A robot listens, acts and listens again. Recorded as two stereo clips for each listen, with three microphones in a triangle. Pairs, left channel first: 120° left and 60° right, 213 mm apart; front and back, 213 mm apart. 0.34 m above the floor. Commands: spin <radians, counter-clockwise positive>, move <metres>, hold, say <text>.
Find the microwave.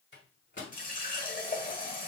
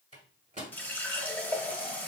spin 2.27
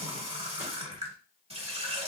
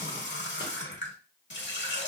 hold
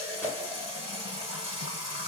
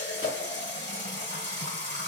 hold
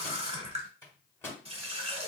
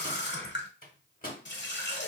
spin 0.79
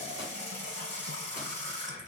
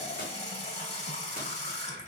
hold
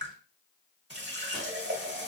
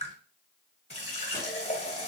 hold
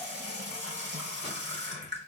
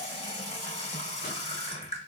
say I heard a microwave from this way, but can't make it out now.